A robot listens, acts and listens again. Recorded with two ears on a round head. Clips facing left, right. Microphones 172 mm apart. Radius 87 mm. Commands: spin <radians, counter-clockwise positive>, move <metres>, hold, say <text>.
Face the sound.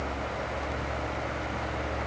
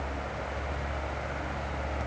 hold
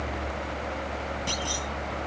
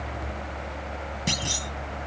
spin -0.44
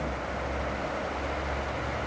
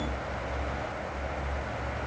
hold
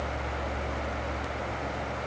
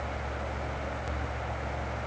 say I heard a clunk, but can't make it out now. It was about straight ahead or 130° right.